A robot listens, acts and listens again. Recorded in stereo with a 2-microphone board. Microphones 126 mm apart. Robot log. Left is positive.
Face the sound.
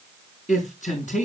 cmd yaw +90
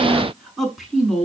end: Found it: a man speaking, straight ahead.